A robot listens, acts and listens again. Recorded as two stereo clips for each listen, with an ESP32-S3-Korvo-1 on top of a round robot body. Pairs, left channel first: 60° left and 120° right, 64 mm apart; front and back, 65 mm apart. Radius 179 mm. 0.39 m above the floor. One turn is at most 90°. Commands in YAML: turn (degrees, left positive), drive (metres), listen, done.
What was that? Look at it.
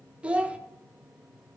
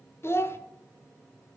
turn: -50
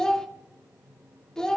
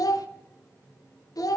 turn: -20
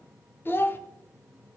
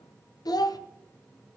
done: "Facing the child speaking, 1 to 2 m away."